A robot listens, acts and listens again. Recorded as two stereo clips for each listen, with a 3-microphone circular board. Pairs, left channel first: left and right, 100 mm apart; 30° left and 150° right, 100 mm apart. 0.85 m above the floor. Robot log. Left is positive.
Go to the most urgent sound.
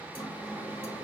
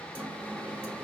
cmd idle
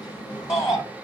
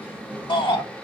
note: The shout: 30° left.
cmd yaw +30
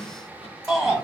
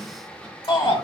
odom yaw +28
cmd fwd 1.0
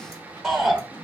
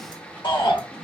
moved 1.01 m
cmd fwd 1.0
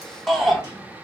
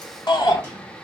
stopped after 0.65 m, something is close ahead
end: Arrived at the shout, straight ahead.